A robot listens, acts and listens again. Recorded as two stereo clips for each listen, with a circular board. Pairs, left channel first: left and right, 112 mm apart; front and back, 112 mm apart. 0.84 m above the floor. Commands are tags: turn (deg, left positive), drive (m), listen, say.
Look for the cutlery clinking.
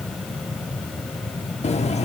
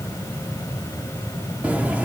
<turn deg="100"/>
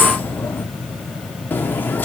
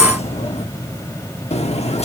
<turn deg="15"/>
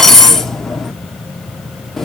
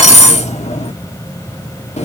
<say>Found it: cutlery clinking, straight ahead.</say>